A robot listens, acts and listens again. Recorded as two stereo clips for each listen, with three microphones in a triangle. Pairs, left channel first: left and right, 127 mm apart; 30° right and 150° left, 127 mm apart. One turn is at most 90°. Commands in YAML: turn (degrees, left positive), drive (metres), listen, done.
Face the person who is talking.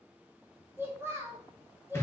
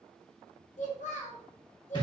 turn: -20
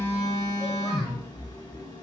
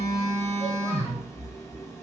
listen: true
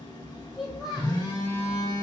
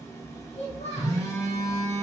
done: "Facing the child speaking."